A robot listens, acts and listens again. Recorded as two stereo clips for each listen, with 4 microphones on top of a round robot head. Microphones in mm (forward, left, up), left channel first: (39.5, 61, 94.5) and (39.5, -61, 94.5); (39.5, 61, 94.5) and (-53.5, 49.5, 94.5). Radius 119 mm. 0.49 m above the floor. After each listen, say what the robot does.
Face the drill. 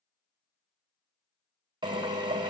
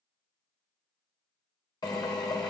Turn 40° right.
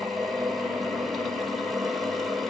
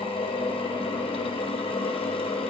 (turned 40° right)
Facing the drill.